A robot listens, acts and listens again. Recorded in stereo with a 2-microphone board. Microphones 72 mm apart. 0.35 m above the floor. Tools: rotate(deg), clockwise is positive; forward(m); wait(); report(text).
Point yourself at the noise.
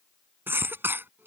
rotate(30)
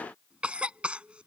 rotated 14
rotate(15)
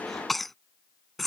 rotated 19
report("Facing the cough.")